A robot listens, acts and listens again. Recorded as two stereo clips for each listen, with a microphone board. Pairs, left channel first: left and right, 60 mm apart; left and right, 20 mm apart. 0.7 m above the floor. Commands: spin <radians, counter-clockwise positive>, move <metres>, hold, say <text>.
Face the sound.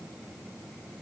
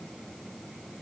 hold
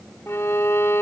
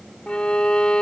spin 0.87
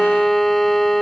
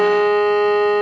say Found it: a violin, straight ahead.